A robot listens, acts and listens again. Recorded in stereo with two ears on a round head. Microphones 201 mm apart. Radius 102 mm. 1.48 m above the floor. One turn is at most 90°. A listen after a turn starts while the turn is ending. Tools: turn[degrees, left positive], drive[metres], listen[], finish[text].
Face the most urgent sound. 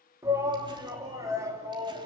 Action: turn[-30]
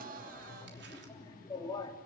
Thought: So it is at 20° left.
Action: turn[20]
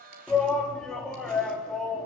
Action: finish[Facing the shout.]